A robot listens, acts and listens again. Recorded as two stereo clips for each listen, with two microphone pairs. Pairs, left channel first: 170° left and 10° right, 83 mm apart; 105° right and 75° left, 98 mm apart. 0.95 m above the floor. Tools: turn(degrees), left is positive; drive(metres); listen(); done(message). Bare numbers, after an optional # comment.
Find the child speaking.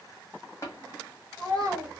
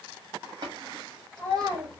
# The child speaking: 25° left.
turn(25)
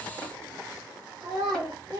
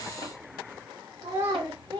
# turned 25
# The child speaking is now 40° left.
turn(40)
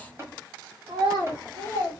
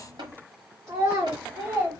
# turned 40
# The child speaking is now 30° left.
turn(30)
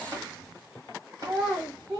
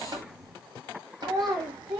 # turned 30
# The child speaking is now 25° left.
turn(25)
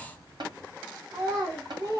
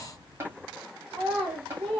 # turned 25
done("Found it: a child speaking, straight ahead.")